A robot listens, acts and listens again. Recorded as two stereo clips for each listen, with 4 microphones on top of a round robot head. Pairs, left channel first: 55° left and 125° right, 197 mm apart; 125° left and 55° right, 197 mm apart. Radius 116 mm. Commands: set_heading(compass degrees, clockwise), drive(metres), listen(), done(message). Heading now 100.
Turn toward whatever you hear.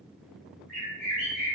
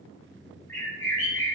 set_heading(260)
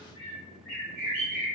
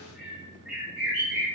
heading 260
set_heading(230)
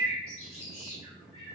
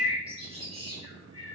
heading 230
done("Found it: a bird, straight ahead, 1 to 2 m away.")